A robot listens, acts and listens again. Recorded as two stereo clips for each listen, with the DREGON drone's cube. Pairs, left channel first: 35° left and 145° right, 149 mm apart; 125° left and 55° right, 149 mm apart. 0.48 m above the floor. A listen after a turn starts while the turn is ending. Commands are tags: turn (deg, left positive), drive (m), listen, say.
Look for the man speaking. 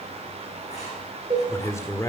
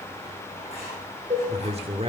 <turn deg="-25"/>
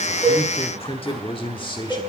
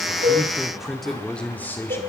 <turn deg="65"/>
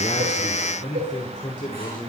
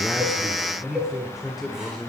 <turn deg="40"/>
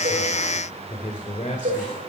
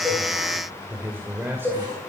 <turn deg="15"/>
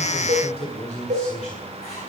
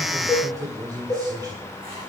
<say>Found it: a man speaking, straight ahead.</say>